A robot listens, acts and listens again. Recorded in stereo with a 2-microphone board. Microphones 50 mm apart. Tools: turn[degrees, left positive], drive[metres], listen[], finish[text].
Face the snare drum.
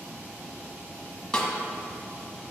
Action: turn[30]
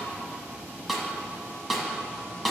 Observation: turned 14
Action: finish[Found it: a snare drum, straight ahead, 1 to 2 m away.]